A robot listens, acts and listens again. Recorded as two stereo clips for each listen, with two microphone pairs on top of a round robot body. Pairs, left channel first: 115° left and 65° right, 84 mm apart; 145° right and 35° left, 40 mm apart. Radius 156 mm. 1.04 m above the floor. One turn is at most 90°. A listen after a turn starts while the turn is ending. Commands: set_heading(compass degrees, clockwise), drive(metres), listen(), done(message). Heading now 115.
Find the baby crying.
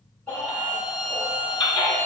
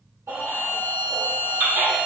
set_heading(40)
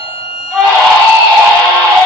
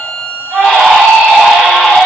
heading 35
done("Found it: a baby crying, straight ahead, 1 to 2 m away.")